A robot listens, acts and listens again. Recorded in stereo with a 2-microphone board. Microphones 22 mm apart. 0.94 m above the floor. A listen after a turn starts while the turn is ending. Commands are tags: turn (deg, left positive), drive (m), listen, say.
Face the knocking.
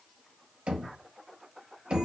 <turn deg="-65"/>
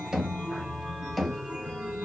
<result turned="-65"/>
<say>Found it: knocking, straight ahead, under 1 m away.</say>